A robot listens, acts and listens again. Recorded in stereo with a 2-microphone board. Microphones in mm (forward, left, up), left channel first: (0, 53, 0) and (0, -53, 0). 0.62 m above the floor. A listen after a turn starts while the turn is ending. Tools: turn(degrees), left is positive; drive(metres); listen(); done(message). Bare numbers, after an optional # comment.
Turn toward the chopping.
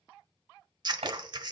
turn(-90)
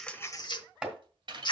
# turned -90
# So it is at 10° right.
turn(-10)
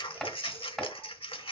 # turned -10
done("Facing the chopping, 2 to 4 m away.")